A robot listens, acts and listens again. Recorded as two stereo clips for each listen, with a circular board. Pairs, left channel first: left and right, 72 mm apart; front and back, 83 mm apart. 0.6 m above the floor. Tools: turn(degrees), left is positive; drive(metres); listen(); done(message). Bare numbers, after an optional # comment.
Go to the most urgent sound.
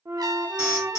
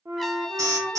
# The alarm: 140° left.
turn(140)
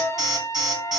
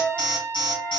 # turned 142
drive(1.0)
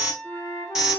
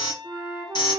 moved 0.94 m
# The alarm is now 10° right.
turn(-10)
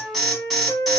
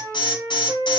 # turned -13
drive(1.0)
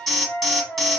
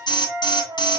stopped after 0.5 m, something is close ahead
done("I am next to the alarm.")